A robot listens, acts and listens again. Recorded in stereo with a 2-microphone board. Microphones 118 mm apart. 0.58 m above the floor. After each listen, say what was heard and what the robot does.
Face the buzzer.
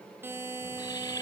The buzzer: about 20° right or 160° right. Turn 20° right.
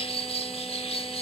Keep listening.
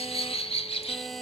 Facing the buzzer, 2 to 4 m away.